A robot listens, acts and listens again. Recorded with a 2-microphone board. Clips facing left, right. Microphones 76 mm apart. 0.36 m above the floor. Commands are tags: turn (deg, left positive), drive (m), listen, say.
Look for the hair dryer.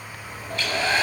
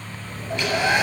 <turn deg="-15"/>
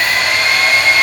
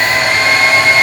<turn deg="-150"/>
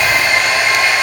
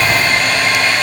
<turn deg="15"/>
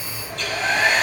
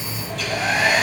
<say>Facing the hair dryer, 2 to 4 m away.</say>